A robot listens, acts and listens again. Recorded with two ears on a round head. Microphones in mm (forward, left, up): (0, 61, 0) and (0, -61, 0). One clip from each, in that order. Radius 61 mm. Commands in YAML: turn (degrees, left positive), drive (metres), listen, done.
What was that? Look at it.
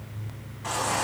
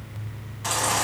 turn: -65
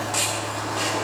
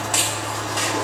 turn: -50
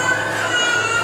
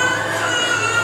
turn: -20
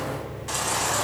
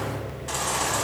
done: "Found it: a baby crying, straight ahead, over 4 m away."